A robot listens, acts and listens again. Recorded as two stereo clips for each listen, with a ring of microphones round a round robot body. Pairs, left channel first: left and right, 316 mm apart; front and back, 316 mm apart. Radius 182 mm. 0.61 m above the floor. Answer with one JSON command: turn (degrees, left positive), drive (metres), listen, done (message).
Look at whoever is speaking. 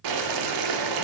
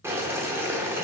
{"listen": true}
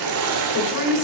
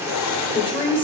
{"turn": 75}
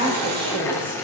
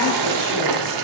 {"turn": -15}
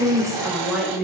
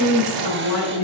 {"done": "Found it: a woman speaking, straight ahead, 2 to 4 m away."}